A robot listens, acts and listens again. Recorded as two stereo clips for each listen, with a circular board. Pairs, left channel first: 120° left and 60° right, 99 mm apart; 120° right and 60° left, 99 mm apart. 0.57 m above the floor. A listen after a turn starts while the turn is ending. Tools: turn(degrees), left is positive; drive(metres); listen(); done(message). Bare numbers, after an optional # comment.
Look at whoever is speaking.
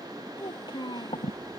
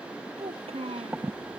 # The child speaking: 75° left.
turn(75)
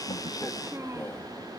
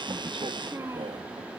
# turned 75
listen()
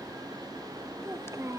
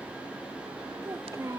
done("Facing the child speaking.")